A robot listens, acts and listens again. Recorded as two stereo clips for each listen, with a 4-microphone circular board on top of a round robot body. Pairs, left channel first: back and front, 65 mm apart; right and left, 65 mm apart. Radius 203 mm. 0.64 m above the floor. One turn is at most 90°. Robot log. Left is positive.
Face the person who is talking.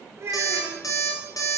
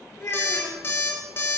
note: The child speaking: 50° right.
cmd yaw -50
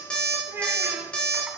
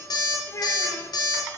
note: The child speaking is now 50° right.
cmd yaw -50
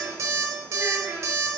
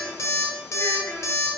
note: The child speaking is now 50° right.
cmd yaw -50
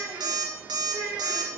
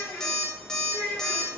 note: The child speaking is now 25° right.
cmd yaw -25
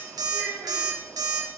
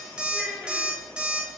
end: Facing the child speaking.